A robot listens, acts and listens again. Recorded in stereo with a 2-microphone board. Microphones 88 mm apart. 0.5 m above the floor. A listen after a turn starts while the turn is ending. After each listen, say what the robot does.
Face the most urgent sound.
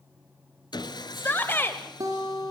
Turn 25° left.
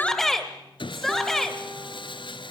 Facing the shout.